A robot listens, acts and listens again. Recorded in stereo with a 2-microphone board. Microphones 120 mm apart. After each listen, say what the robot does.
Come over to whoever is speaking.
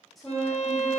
Turn 30° left.
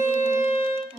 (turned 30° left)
Turn 25° right.
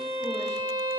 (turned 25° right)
Keep listening.
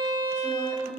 Turn 20° left.
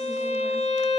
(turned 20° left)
Keep listening.
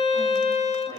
Keep listening.
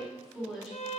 Drive 1.0 m forward.
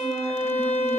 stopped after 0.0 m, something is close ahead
Keep listening.
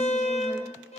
Keep listening.
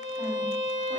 Facing where the woman speaking came from. I can't hear it now. I did not reach it.